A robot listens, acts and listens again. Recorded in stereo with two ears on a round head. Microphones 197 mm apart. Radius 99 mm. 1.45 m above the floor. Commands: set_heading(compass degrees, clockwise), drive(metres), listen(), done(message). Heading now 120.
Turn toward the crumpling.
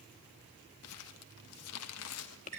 set_heading(30)
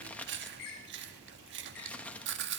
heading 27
done("Found it: crumpling, straight ahead, 1 to 2 m away.")